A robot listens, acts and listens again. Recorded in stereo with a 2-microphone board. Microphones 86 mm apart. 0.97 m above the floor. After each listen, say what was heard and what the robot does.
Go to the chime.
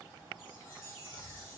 The chime: about 30° left or 150° left. Turn 30° left.
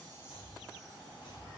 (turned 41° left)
Keep listening.
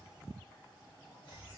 Keep listening.
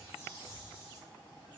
So it is at 15° right. Turn 15° right.
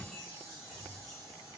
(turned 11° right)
Drive 1.0 m forward.
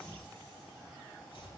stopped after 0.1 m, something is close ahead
Keep listening.
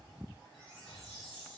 Blocked. The chime is further on, straight ahead.